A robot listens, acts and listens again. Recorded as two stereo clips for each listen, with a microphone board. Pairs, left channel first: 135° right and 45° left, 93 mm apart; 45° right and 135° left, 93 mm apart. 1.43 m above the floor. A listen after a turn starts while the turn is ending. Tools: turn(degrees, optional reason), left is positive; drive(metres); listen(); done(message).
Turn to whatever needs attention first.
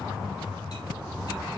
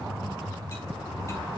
listen()
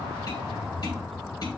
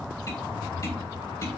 listen()
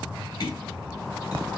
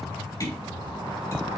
done("I can't make out anything urgent to turn to.")